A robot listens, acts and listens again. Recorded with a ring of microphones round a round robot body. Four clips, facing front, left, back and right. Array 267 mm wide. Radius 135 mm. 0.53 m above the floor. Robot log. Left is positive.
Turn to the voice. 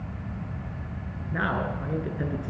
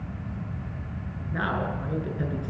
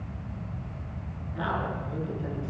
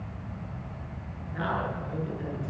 note: The man speaking: 25° left.
cmd yaw +25
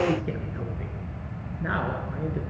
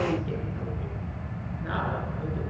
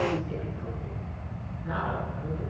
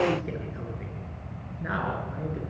note: The man speaking is now 15° right.
cmd yaw -15
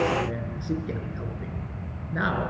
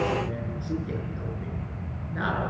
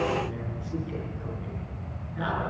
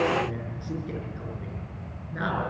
end: Found it: a man speaking, straight ahead, over 4 m away.